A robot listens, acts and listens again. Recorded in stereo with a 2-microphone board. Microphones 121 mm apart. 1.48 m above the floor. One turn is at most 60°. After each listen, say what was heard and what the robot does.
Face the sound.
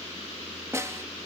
The snare drum: about 25° right or 155° right. Turn 25° right.
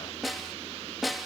Facing the snare drum.